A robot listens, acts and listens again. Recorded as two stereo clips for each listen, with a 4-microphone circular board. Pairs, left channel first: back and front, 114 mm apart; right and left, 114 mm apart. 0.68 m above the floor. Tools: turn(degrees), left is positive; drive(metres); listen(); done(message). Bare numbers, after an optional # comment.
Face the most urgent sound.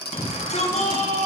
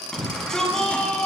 # The shout: 175° right.
turn(-175)
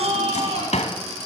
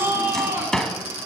# The shout is now 20° left.
turn(20)
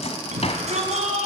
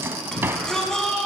done("Found it: a shout, straight ahead, over 4 m away.")